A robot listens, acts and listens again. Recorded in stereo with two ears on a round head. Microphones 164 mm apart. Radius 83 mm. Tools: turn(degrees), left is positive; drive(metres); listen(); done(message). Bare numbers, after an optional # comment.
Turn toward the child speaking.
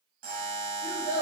turn(-30)
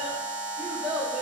# So it is at 30° left.
turn(30)
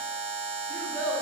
done("Facing the child speaking.")